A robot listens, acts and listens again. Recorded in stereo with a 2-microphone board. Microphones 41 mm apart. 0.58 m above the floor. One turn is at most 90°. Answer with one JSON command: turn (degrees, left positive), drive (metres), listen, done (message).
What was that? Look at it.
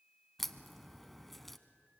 {"turn": 30}
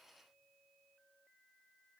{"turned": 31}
{"listen": true}
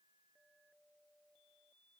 {"done": "I heard a crack, but can't make it out now. It was about 25° right or 145° left."}